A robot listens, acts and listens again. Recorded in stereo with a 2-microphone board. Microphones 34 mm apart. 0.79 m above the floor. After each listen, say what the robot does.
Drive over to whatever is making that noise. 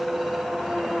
Keep listening.
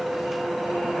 Keep listening.
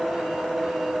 I can't make out anything.